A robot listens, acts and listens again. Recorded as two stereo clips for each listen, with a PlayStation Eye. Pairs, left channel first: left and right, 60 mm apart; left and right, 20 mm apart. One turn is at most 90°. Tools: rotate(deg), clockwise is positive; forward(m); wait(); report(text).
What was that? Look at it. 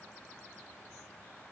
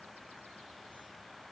wait()
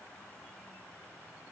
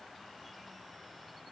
wait()
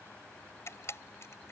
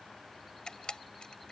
rotate(-60)
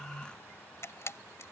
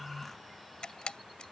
rotate(-60)
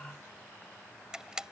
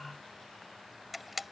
rotate(15)
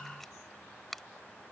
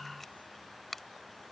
report("Facing the camera shutter.")